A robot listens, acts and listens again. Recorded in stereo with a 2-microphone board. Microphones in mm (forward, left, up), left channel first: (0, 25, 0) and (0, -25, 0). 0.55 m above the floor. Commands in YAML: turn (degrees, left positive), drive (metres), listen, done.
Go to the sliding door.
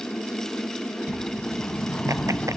turn: 20
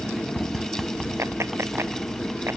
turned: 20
drive: 1.0
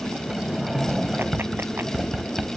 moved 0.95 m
turn: -10
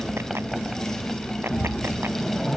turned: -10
drive: 1.0
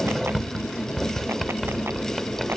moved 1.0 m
drive: 1.0
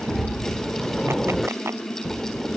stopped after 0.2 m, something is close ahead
done: "I am next to the sliding door."